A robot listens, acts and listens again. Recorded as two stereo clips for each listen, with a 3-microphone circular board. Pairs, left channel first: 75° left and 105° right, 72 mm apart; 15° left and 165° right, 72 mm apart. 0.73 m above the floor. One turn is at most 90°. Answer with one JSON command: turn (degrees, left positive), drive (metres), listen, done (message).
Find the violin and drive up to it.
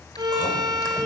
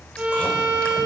{"turn": -90}
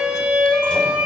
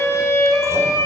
{"turn": -35}
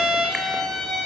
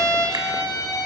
{"turn": -10}
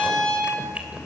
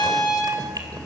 {"drive": 1.0}
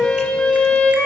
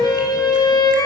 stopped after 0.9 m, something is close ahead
{"done": "Something is in my way. I am facing the violin but have not reached it."}